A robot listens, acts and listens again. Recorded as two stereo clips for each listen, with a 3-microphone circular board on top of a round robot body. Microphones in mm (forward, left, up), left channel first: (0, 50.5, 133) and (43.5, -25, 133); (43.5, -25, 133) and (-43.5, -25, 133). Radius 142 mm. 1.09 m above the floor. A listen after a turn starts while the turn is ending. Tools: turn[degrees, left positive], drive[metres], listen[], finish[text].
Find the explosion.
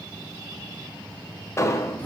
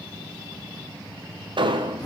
Thought: The explosion: 175° left.
Action: turn[175]
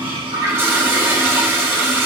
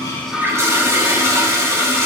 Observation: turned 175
Action: finish[I heard an explosion from this way, but can't make it out now.]